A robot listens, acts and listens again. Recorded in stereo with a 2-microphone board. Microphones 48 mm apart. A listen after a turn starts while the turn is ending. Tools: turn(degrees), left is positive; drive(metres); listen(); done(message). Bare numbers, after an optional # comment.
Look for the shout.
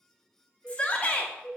# The shout: about 25° left or 155° left.
turn(25)
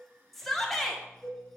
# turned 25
done("Found it: a shout, straight ahead.")